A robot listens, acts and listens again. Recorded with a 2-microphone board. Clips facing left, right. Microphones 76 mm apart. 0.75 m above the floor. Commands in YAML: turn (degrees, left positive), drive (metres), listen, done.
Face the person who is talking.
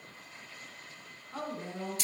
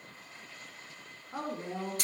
turn: -30
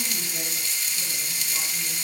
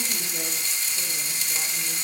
listen: true
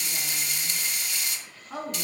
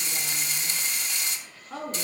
turn: 15
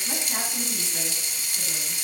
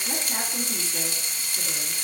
listen: true
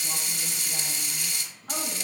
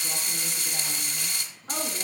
listen: true
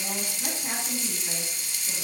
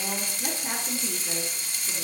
done: "Facing where the woman speaking came from. I can't hear it now."